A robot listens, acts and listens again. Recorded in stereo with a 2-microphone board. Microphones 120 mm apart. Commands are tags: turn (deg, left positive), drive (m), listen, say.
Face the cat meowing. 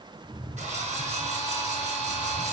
<turn deg="-25"/>
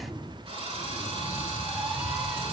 <turn deg="-20"/>
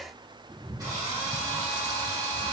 <turn deg="-30"/>
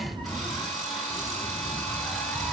<turn deg="10"/>
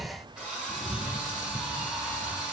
<say>Facing the cat meowing.</say>